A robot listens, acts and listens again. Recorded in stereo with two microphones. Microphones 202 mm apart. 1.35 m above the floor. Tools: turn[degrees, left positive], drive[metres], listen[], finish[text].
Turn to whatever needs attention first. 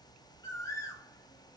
Action: listen[]
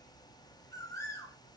Action: listen[]
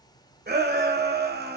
Thought: The shout: about 55° right or 125° right.
Action: turn[-55]
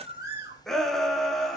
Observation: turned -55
Action: finish[Facing the shout.]